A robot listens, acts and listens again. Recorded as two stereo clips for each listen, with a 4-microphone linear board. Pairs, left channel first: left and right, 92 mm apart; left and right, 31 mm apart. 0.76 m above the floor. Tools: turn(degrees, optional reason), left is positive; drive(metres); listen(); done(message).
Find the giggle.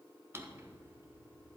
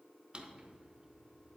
listen()
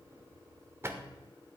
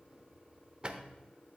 listen()
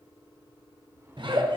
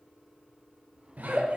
turn(degrees=-60, reason="The giggle: about 60° right or 120° right.")
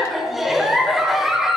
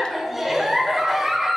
done("Found it: a giggle, straight ahead.")